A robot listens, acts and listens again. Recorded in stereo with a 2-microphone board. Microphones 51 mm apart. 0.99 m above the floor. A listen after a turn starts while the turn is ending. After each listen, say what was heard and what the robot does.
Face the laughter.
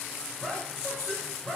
The laughter: about 25° left or 155° left. Turn 25° left.
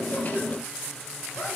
Keep listening.
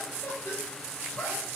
So it is at 120° left. Turn 120° left.
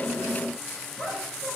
Found it: laughter, straight ahead, over 4 m away.